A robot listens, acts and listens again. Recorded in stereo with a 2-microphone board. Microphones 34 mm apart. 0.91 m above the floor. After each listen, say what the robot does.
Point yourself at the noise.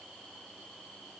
Keep listening.
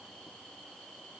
Keep listening.
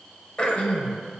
Turn 30° left.
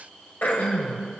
Turn 120° left.
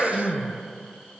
Facing the throat clearing.